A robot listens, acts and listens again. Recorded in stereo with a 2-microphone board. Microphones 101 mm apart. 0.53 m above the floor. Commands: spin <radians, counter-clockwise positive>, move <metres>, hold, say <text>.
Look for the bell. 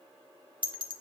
spin -0.87
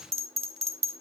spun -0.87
spin -1.40
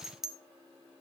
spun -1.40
say Facing the bell, under 1 m away.